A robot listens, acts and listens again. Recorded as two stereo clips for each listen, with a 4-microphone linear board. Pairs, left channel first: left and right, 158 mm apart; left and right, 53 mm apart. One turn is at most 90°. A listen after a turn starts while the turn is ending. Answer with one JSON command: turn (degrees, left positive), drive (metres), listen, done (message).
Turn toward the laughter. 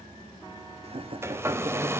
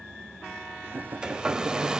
{"turn": -35}
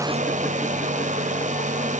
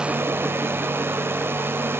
{"listen": true}
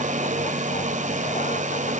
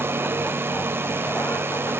{"listen": true}
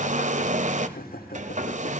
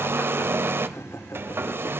{"turn": 70}
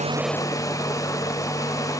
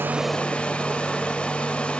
{"listen": true}
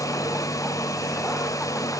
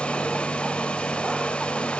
{"listen": true}
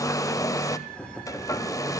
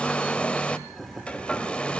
{"done": "Found it: laughter, straight ahead."}